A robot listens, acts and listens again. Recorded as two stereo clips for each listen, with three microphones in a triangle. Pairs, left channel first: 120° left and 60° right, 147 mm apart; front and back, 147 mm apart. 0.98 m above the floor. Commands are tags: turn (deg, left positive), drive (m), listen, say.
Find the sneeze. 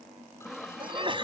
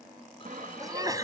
<turn deg="-115"/>
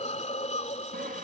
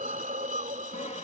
<say>Facing where the sneeze came from. I can't hear it now.</say>